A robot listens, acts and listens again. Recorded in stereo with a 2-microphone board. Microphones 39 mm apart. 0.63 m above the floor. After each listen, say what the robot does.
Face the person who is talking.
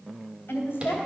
Turn 70° left.
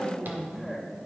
Turn 10° right.
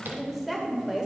Turn 15° right.
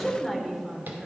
Turn 15° right.
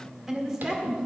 Turn 25° right.
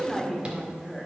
Found it: a woman speaking, straight ahead.